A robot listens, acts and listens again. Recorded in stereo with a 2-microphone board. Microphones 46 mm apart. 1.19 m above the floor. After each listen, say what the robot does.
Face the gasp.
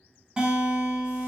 Keep listening.
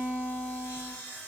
Keep listening.
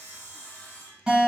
I can't make out a gasp to turn to.